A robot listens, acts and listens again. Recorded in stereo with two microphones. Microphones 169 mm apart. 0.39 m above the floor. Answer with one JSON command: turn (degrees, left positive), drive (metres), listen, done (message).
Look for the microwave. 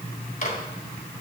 {"turn": 55}
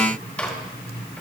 {"turn": 10}
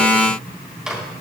{"done": "Found it: a microwave, straight ahead."}